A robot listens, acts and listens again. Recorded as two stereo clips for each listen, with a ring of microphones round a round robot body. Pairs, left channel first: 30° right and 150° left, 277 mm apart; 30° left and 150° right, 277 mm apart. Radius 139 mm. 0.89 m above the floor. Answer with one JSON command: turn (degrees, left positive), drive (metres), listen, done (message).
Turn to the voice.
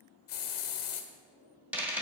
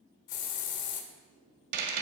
{"listen": true}
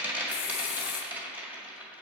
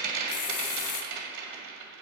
{"listen": true}
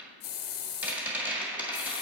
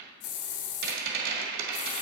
{"done": "I can't make out anyone speaking to turn to."}